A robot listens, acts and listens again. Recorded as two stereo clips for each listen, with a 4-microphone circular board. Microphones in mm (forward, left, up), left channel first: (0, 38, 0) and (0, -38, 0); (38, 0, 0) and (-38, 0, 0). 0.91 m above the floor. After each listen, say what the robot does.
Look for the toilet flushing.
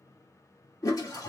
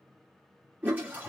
Turn 115° left.
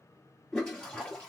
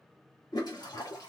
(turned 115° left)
Turn 10° left.
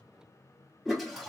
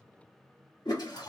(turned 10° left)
Facing the toilet flushing, 1 to 2 m away.